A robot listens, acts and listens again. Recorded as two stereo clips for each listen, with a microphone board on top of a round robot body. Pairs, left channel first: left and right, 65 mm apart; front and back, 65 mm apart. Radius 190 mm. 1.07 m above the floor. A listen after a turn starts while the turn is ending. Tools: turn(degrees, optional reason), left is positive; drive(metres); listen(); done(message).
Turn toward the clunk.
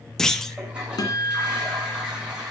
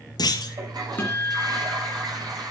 done("Found it: a clunk, straight ahead, 1 to 2 m away.")